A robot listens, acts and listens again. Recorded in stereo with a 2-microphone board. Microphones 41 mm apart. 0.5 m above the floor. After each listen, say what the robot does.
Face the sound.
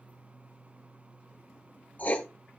Turn 40° left.
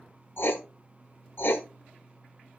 Turn 95° left.
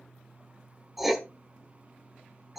Facing the writing, under 1 m away.